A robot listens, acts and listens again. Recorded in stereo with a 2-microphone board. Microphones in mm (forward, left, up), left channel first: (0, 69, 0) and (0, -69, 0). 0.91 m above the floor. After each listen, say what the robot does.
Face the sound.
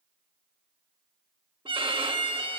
Turn 40° right.
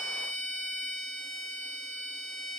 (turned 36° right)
Turn 100° right.
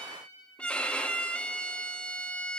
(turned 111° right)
Turn 10° left.
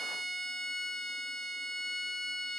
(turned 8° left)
Found it: a violin, straight ahead, 1 to 2 m away.